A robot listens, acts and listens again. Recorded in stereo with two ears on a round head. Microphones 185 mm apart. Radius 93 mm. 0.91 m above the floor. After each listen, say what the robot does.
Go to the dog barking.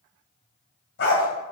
Turn 60° left.
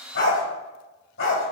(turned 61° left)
Turn 60° left.
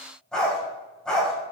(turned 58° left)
Drive 1.0 m forward.
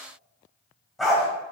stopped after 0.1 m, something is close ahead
Something is in my way. I am facing the dog barking but have not reached it.